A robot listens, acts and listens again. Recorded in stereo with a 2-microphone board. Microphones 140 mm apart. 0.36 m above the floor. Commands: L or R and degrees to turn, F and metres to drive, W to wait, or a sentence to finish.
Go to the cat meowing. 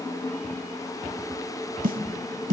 W
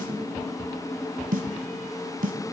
W
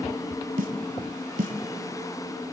I can't make out a cat meowing, only a snare drum.